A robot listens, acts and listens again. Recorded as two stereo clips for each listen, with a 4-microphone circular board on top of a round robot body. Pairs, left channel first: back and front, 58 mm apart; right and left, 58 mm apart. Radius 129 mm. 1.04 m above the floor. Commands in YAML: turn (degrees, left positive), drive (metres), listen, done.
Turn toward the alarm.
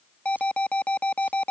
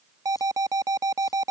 turn: 110
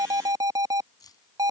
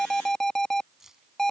turn: -10
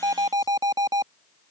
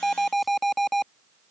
done: "Facing the alarm."